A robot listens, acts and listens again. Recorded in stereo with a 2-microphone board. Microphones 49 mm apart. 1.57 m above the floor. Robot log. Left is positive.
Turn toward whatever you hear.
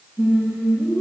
note: The singing: about 50° right or 130° right.
cmd yaw -50
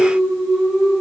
end: Facing the singing, 2 to 4 m away.